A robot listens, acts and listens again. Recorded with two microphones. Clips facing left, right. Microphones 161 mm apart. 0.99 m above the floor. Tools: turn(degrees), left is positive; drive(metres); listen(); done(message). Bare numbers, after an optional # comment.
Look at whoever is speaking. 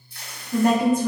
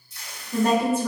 # The woman speaking: about 15° left or 165° left.
turn(15)
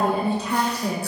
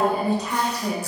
# So it is at 150° left.
turn(150)
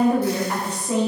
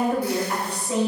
# The woman speaking is now 45° left.
turn(45)
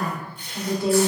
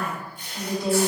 done("Found it: a woman speaking, straight ahead, 1 to 2 m away.")